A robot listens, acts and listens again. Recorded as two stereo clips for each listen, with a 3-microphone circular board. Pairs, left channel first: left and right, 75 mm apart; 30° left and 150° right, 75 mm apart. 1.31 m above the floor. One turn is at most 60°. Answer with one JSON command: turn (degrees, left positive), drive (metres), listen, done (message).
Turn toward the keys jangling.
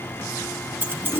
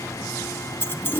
{"turn": -30}
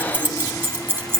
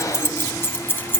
{"turn": -35}
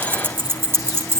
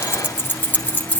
{"turn": -40}
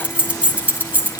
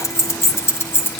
{"turn": -30}
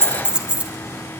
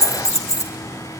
{"turn": -15}
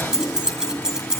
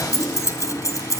{"turn": -10}
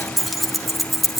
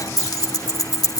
{"done": "Facing the keys jangling, 1 to 2 m away."}